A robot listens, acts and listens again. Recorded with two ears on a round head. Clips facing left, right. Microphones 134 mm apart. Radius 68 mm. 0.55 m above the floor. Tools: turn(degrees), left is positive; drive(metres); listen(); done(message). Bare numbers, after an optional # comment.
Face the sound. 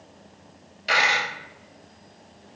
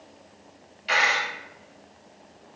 # The dropped coin: about 55° left or 125° left.
turn(55)
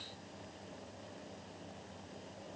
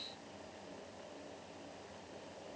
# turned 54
listen()
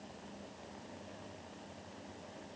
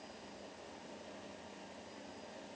done("I heard a dropped coin, but can't make it out now. It was about 5° left or 70° left.")